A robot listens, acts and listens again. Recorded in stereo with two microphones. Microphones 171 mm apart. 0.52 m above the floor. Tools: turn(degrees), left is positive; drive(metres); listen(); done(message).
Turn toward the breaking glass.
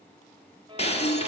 turn(degrees=40)
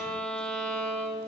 listen()
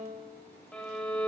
done("I heard breaking glass, but can't make it out now. It was about straight ahead or 100° left.")